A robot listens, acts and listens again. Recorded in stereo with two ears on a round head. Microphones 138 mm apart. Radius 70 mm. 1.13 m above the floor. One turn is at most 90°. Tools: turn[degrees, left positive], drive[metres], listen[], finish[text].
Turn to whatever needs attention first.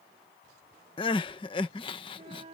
Thought: The crying: about 30° left or 150° left.
Action: turn[30]
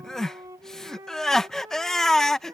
Action: finish[Facing the crying.]